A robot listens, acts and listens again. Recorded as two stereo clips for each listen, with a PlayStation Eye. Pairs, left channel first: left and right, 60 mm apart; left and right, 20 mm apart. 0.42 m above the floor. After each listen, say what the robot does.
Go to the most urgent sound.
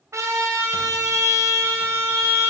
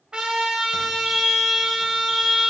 Turn 30° right.
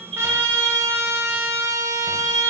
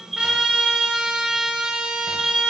Drive 1.0 m forward.
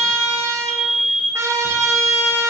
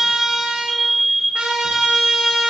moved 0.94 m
Drive 1.0 m forward.
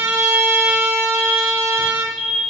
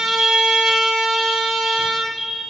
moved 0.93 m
Drive 1.0 m forward.
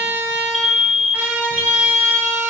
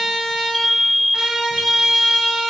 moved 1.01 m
Drive 1.0 m forward.
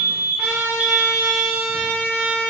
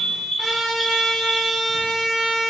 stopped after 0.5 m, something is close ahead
Turn 15° right.
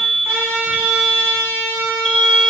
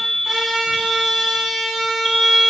Arrived at the alarm, straight ahead.